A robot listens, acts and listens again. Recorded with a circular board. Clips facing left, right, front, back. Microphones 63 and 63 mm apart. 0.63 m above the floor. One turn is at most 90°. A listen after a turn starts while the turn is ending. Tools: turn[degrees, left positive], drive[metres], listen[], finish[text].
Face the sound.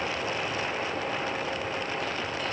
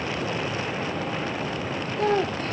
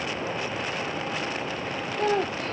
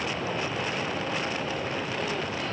Thought: The child speaking: 45° right.
Action: turn[-45]
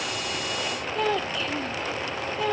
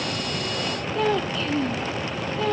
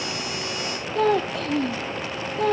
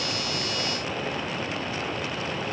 Action: finish[Facing the child speaking.]